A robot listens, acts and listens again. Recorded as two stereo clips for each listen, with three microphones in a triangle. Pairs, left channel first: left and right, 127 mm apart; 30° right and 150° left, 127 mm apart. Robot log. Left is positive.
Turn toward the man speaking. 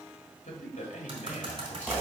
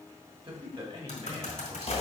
note: The man speaking: 105° left.
cmd yaw +105
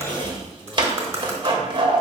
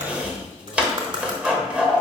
cmd idle
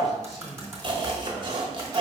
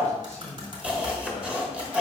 end: Facing the man speaking, 2 to 4 m away.